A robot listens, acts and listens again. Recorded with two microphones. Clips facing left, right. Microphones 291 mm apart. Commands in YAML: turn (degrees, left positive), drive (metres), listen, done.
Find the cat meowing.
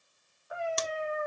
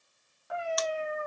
turn: -70
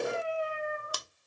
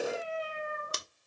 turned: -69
turn: -45
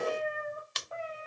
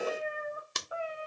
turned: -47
turn: -15
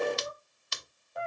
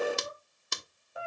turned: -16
turn: -10
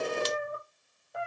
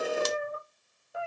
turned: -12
done: "Facing the cat meowing."